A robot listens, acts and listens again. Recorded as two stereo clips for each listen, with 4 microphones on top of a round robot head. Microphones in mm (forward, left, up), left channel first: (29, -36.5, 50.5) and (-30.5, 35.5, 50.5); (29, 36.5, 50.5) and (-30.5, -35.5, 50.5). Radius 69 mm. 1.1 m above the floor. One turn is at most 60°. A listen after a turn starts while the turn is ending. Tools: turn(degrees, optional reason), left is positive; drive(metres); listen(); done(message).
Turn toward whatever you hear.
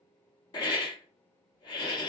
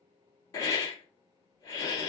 done("Facing the hiss, 1 to 2 m away.")